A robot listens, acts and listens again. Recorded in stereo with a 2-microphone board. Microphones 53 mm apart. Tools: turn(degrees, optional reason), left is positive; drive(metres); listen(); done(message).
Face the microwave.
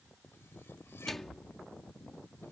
turn(degrees=30)
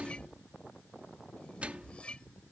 turn(degrees=-25, reason="So it is at 25° right.")
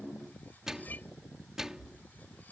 turn(degrees=-10, reason="The microwave is now 10° right.")
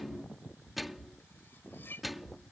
done("Facing the microwave.")